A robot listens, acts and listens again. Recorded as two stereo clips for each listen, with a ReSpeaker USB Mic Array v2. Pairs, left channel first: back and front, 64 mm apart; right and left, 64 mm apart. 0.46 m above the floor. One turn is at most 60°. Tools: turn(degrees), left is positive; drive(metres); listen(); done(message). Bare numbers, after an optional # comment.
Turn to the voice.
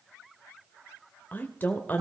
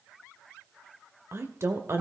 # The woman speaking: 125° left.
turn(60)
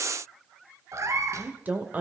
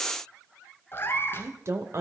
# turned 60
# The woman speaking is now 60° left.
turn(60)
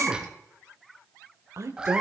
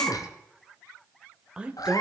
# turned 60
# The woman speaking is now 20° left.
turn(20)
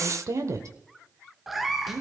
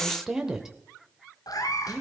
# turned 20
# The woman speaking is now 10° left.
turn(10)
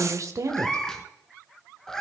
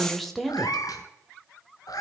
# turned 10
done("Found it: a woman speaking, straight ahead, 1 to 2 m away.")